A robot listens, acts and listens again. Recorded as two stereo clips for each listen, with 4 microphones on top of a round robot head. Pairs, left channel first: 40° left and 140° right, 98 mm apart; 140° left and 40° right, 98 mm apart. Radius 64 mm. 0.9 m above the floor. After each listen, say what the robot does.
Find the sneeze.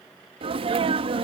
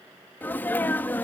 Turn 150° right.
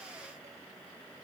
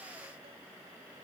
I heard a sneeze from this way, but can't make it out now.